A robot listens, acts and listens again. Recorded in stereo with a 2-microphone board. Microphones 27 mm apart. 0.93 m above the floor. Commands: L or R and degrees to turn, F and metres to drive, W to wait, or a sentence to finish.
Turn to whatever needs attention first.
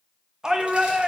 R25
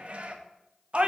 R130
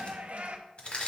R55
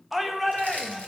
Found it: a shout, straight ahead.